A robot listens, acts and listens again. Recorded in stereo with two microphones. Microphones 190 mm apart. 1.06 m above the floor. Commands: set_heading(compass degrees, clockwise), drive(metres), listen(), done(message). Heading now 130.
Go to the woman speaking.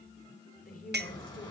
set_heading(85)
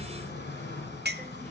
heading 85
listen()
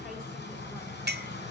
listen()
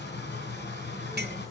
done("I heard a woman speaking, but can't make it out now. It was about straight ahead or 90° left. I did not reach it.")